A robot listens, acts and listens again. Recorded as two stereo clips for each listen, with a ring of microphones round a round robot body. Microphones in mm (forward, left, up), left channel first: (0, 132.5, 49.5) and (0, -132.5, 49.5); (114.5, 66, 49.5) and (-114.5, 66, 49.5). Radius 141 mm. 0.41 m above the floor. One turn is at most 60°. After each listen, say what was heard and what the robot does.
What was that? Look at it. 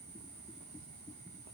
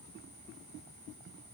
Keep listening.
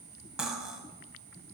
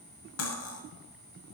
Facing the cutlery clinking.